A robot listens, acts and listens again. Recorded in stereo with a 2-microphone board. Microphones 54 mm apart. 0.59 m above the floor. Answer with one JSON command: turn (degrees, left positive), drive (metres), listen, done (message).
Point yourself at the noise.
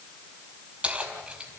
{"turn": -30}
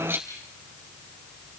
{"turn": -140}
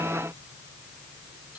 {"listen": true}
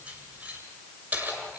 {"turn": -30}
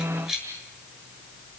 {"turn": -10}
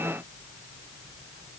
{"listen": true}
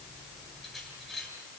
{"done": "Facing the keys jangling, over 4 m away."}